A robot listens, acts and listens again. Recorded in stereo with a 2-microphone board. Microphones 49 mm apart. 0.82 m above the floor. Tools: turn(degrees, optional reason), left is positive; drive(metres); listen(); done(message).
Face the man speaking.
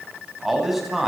turn(degrees=-30)
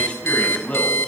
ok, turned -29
turn(degrees=30, reason="So it is at 30° left.")
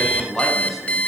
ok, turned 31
done("Found it: a man speaking, straight ahead.")